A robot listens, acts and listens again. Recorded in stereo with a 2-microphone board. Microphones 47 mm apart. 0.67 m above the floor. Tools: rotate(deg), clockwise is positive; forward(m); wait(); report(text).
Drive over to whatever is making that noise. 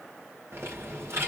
rotate(70)
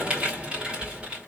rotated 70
rotate(25)
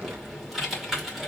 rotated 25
forward(1.0)
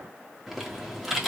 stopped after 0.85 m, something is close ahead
report("Arrived at the typing on a keyboard, straight ahead.")